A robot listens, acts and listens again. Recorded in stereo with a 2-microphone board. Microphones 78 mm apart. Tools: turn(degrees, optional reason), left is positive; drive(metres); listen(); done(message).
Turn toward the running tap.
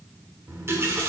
turn(degrees=-35, reason="The running tap: about 35° right or 145° right.")
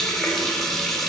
done("Facing the running tap.")